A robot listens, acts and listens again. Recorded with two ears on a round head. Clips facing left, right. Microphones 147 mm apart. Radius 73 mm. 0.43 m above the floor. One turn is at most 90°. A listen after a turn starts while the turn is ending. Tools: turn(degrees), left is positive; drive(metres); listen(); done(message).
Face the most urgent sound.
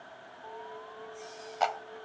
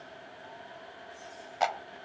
turn(degrees=90)
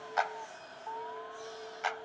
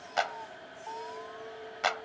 done("Facing the alarm.")